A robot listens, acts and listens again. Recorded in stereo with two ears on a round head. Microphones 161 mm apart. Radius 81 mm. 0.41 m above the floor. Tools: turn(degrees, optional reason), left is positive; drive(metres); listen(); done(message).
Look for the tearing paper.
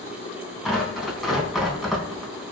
turn(degrees=30)
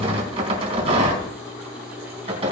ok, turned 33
turn(degrees=-35, reason="So it is at 35° right.")
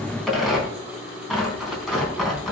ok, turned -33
done("Found it: tearing paper, straight ahead, over 4 m away.")